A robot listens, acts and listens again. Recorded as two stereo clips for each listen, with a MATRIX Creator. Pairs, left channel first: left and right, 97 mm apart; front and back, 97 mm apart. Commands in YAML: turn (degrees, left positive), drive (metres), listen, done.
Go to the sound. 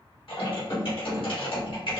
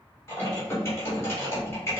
turn: 65
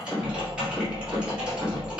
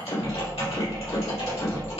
turn: -10
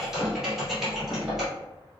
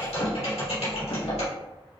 drive: 1.0
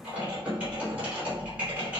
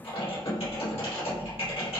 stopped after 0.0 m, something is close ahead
turn: -15
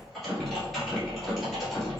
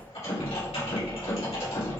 done: "Something is in my way. I am facing the typing on a keyboard but have not reached it."